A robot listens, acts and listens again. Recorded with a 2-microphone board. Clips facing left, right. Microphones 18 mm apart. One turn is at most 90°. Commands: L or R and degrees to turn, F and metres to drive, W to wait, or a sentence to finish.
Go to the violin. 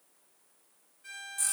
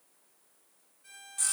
L30
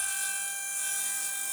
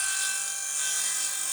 W
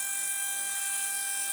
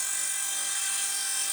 W
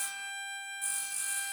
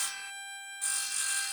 F1.0
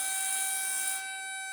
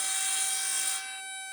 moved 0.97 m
F1.0
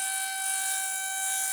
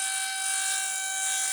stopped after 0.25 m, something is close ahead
R10
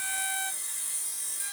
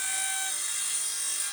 I am next to the violin.